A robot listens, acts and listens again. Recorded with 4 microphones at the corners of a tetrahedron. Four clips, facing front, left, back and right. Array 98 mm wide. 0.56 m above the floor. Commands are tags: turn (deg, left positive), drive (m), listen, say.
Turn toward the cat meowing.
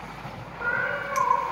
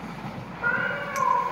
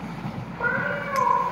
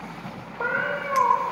<turn deg="-110"/>
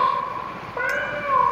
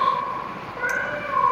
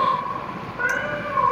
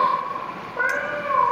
<turn deg="-20"/>
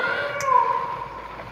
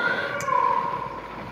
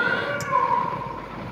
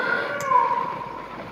<say>Found it: a cat meowing, straight ahead.</say>